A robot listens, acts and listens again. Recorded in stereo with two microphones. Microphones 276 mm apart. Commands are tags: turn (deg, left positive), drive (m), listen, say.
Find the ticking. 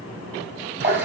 <listen/>
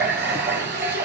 <listen/>
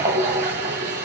<say>I can't make out ticking, only a running tap.</say>